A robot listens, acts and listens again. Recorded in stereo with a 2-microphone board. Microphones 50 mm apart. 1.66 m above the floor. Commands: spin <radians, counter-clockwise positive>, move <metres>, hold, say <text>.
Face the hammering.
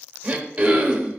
hold
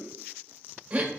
hold
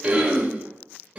say I can't make out hammering, only throat clearing.